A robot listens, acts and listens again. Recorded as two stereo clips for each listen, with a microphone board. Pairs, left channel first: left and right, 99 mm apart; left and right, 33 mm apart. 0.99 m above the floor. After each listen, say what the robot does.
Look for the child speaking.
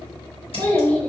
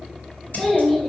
Turn 30° left.
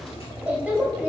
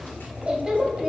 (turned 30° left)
Turn 15° right.
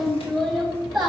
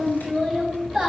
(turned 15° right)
Facing the child speaking, 2 to 4 m away.